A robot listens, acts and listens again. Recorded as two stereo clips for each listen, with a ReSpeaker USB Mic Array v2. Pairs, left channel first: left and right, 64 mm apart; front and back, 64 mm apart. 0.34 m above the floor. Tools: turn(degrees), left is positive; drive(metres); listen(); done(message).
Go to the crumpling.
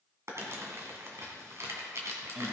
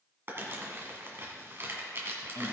turn(degrees=-130)
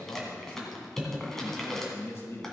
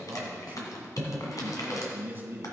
drive(metres=1.0)
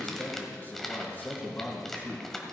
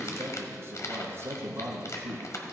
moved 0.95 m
drive(metres=1.0)
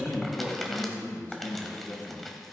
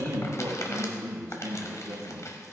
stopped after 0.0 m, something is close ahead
done("I am next to the crumpling.")